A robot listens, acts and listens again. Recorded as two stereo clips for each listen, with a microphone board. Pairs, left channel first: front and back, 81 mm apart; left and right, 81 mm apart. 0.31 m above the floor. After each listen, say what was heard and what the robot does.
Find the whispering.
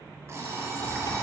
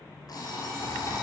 Keep listening.
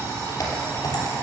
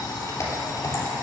Keep listening.
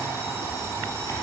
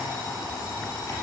I can't make out whispering, only an alarm clock and typing on a keyboard.